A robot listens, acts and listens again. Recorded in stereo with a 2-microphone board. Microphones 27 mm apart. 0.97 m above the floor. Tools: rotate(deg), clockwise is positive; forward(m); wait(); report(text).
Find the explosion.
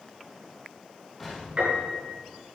rotate(30)
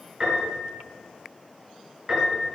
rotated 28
wait()
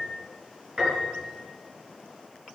report("I heard an explosion, but can't make it out now. It was about 15° left or 140° right.")